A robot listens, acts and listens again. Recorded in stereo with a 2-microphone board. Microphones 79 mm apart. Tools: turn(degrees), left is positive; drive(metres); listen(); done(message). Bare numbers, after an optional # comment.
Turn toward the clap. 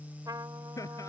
listen()
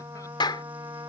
turn(90)
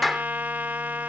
done("Facing the clap.")